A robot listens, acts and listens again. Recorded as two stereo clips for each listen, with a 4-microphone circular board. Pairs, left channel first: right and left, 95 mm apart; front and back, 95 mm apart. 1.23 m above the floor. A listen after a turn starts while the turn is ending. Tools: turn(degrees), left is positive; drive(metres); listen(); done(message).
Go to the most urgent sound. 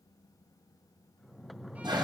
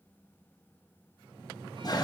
listen()
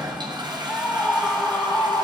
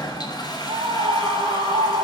turn(degrees=-160)
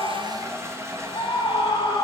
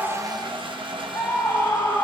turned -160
turn(degrees=-55)
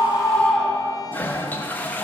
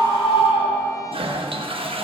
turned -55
turn(degrees=-10)
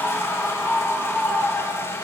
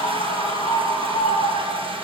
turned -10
drive(metres=1.0)
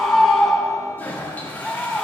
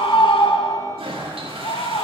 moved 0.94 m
drive(metres=1.0)
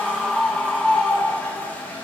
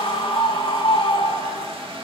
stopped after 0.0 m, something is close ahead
done("I am next to the scream.")